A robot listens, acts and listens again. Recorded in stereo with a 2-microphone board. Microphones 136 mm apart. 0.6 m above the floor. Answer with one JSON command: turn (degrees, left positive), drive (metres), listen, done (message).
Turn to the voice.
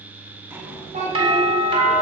{"turn": -70}
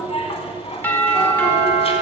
{"listen": true}
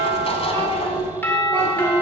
{"turn": -40}
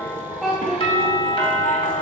{"done": "Found it: a child speaking, straight ahead."}